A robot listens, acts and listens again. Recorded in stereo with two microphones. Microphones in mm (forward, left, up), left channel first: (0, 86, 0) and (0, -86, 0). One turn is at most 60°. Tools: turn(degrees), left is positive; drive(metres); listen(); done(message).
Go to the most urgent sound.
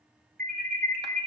turn(degrees=-55)
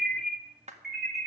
drive(metres=1.0)
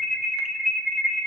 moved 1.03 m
drive(metres=1.0)
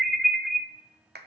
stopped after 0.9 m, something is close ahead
done("Arrived at the alarm, straight ahead.")